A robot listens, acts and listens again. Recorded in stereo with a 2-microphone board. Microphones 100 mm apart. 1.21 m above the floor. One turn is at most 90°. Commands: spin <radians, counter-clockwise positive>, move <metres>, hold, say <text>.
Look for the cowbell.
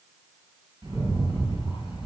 hold
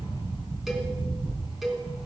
spin 0.52
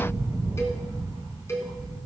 spin 1.57
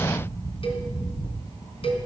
spin 1.31
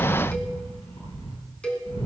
spin 0.17
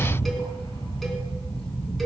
hold
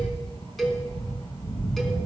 say Found it: a cowbell, straight ahead.